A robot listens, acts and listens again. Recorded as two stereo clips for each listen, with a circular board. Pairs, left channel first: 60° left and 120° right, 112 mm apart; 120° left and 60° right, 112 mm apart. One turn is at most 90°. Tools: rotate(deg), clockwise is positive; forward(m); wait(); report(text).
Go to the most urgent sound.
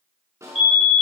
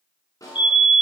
rotate(-80)
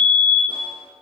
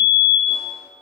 forward(1.0)
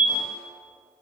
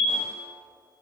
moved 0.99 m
forward(1.0)
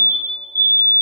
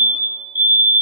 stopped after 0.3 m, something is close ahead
report("I am next to the fire alarm.")